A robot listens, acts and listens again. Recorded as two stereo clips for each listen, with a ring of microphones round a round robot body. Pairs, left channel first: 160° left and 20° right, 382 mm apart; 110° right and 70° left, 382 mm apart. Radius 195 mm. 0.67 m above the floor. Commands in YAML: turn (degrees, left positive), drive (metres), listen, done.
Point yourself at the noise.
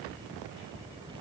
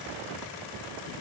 listen: true
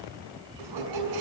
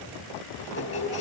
turn: -55
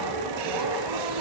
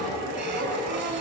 done: "Found it: a squeak, straight ahead."